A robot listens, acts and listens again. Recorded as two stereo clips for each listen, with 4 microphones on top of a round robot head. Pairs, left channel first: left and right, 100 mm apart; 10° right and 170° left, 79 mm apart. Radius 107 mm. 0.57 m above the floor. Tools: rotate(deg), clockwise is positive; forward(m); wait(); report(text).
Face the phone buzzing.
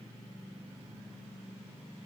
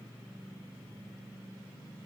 wait()
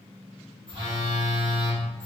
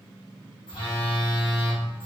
rotate(45)
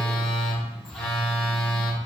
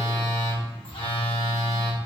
report("Facing the phone buzzing, 1 to 2 m away.")